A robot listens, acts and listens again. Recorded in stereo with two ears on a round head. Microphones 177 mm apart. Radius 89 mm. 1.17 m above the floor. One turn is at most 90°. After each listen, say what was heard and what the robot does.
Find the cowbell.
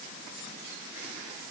Keep listening.
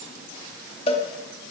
The cowbell: about 30° left or 150° left. Turn 30° left.
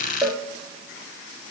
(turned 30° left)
Facing the cowbell, 1 to 2 m away.